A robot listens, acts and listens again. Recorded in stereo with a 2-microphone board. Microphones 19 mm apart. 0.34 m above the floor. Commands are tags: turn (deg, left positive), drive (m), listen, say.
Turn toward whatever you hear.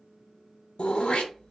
<turn deg="65"/>
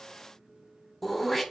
<say>Found it: throat clearing, straight ahead.</say>